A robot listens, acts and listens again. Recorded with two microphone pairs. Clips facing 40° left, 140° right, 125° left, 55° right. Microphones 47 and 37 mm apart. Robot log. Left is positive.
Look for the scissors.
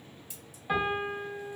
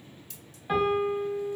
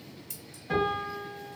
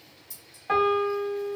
note: The scissors: 115° left.
cmd yaw +115
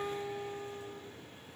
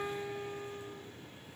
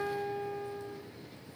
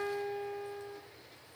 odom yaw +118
cmd idle
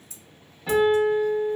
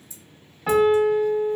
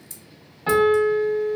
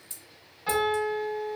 end: Found it: scissors, straight ahead, under 1 m away.